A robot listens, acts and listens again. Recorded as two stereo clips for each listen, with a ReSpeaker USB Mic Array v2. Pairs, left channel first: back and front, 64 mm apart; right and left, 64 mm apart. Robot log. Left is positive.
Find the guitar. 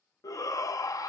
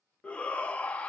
cmd idle
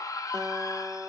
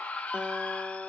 note: The guitar: 15° left.
cmd yaw +15
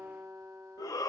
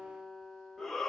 end: Facing the guitar, under 1 m away.